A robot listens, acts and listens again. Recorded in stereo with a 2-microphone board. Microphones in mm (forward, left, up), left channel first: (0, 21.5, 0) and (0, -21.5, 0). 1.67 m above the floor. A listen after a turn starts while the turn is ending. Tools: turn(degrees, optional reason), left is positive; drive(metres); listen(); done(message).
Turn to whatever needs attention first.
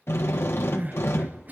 turn(degrees=-40, reason="The crying: about 40° right or 140° right.")
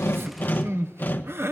turn(degrees=-95, reason="So it is at 95° right.")
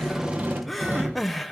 done("Facing the crying, 1 to 2 m away.")